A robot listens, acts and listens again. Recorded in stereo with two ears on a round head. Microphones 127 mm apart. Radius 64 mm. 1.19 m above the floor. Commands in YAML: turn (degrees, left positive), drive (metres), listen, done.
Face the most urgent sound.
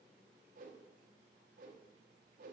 listen: true
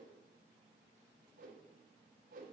listen: true
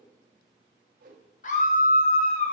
turn: 55
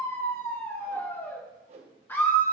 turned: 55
turn: 15
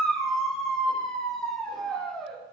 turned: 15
done: "Facing the scream."